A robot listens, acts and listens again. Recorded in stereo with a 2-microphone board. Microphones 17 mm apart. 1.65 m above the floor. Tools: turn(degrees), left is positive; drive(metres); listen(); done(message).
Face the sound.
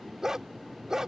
turn(degrees=-30)
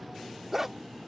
turn(degrees=-15)
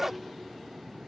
turn(degrees=-20)
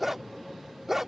turn(degrees=-15)
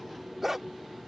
turn(degrees=-15)
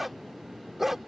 turn(degrees=-10)
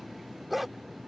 done("Found it: a dog barking, straight ahead.")